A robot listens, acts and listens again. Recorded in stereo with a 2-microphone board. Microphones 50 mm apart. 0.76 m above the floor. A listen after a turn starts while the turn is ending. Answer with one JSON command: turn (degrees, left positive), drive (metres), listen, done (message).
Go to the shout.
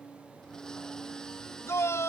{"turn": 60}
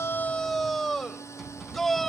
{"drive": 1.0}
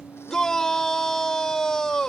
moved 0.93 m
{"turn": 10}
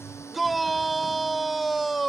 {"drive": 1.0}
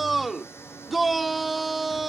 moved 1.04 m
{"drive": 1.0}
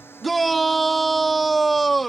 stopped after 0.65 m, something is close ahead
{"done": "Arrived at the shout, straight ahead."}